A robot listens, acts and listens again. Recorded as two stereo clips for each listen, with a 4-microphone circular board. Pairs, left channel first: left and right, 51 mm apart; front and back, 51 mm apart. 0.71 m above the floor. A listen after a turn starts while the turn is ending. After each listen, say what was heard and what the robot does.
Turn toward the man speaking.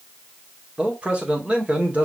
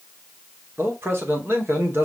The man speaking: 150° right. Turn 150° right.
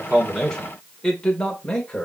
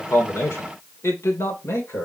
The man speaking is now 15° left. Turn 15° left.
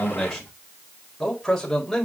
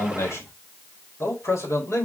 Facing the man speaking.